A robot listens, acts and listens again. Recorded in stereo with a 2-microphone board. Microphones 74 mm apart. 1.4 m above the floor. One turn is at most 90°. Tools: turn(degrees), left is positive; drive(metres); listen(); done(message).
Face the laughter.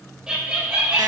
turn(degrees=-15)
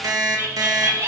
turn(degrees=-40)
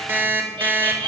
turn(degrees=-90)
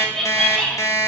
turn(degrees=10)
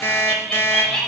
turn(degrees=15)
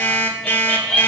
turn(degrees=10)
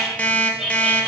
done("Found it: laughter, straight ahead.")